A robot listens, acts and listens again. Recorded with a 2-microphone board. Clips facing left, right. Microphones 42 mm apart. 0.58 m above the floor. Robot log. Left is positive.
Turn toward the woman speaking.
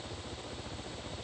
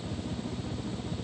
cmd idle
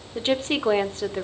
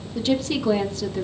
note: The woman speaking: about 35° left or 145° left.
cmd yaw +35
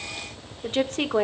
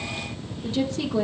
note: So it is at 105° left.
cmd yaw +105
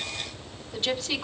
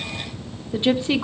note: The woman speaking is now 30° right.
cmd yaw -30
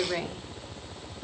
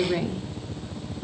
note: The woman speaking is now 10° left.
cmd yaw +10
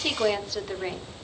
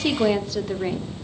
end: Facing the woman speaking.